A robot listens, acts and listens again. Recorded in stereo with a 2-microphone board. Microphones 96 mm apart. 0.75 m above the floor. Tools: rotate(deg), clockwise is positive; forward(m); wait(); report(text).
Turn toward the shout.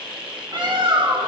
wait()
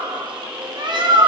wait()
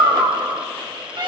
report("I can't make out a shout, only a bird.")